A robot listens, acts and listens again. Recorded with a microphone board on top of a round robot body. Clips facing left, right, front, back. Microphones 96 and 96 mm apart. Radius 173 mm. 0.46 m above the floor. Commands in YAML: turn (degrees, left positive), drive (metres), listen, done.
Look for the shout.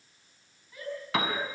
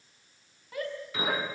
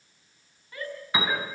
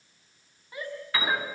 turn: -110
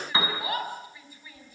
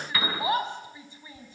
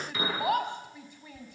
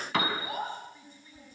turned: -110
turn: -25
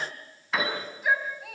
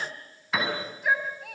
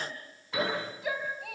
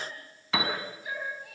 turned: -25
done: "Facing the shout, over 4 m away."